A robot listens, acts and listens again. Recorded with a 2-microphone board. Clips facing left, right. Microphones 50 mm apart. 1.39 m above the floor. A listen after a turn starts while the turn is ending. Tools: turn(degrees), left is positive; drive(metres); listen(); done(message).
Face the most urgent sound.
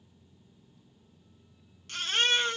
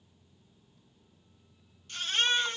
turn(degrees=90)
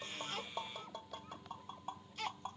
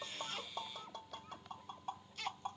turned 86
turn(degrees=15)
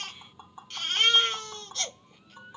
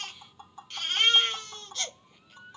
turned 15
done("Facing the baby crying, 2 to 4 m away.")